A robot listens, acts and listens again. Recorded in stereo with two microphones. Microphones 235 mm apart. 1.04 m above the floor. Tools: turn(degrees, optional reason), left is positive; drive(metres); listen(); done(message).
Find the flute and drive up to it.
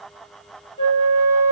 turn(degrees=25, reason="The flute: about 25° left or 155° left.")
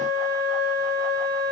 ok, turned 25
drive(metres=1.0)
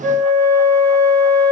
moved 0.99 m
drive(metres=1.0)
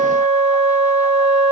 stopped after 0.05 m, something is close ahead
turn(degrees=15, reason="The flute is now 15° left.")
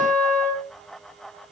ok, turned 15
done("Arrived at the flute, straight ahead.")